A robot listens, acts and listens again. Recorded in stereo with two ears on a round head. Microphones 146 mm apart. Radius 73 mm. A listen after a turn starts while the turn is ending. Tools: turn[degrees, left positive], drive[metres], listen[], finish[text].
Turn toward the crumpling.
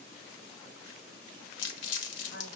Thought: The crumpling: about 75° left or 105° left.
Action: turn[75]
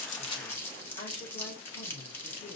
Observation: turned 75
Thought: So it is at 10° left.
Action: turn[10]
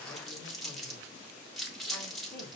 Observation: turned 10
Action: finish[Facing the crumpling, 1 to 2 m away.]